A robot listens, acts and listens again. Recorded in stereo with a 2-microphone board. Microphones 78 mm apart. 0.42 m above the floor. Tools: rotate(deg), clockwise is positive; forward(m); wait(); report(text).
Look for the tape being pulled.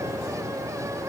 wait()
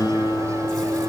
wait()
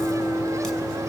report("I can't make out tape being pulled to turn to.")